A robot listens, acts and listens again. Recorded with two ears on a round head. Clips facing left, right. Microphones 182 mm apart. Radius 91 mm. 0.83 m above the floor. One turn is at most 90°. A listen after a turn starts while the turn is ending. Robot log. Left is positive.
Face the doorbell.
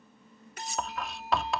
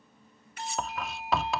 note: The doorbell: about 45° right or 135° right.
cmd yaw -45
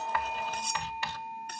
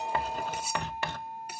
note: So it is at 85° right.
cmd yaw -85
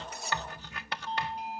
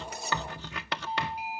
note: The doorbell is now 10° right.
cmd yaw -10
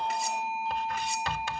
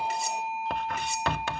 end: Found it: a doorbell, straight ahead.